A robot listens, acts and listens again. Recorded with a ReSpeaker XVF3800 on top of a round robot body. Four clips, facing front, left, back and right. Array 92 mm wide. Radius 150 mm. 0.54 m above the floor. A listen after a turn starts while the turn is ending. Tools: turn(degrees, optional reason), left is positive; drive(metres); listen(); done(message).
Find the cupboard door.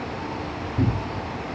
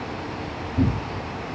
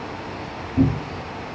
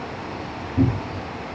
turn(degrees=-145, reason="The cupboard door: 145° right.")
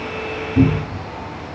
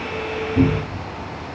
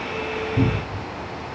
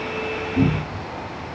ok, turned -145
turn(degrees=15, reason="The cupboard door is now 15° left.")
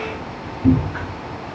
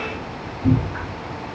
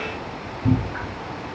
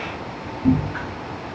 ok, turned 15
done("Facing the cupboard door, 1 to 2 m away.")